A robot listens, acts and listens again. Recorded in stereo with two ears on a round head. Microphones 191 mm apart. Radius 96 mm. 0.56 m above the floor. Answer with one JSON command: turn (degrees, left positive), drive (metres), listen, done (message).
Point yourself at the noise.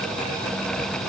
{"listen": true}
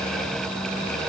{"listen": true}
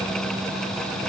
{"done": "I can't make out anything to turn to."}